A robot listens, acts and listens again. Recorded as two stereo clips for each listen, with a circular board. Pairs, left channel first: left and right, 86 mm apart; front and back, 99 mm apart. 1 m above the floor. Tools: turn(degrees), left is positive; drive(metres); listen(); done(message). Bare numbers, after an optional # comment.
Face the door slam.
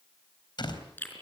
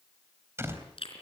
# The door slam: 115° left.
turn(115)
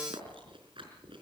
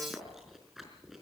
done("Facing where the door slam came from. I can't hear it now.")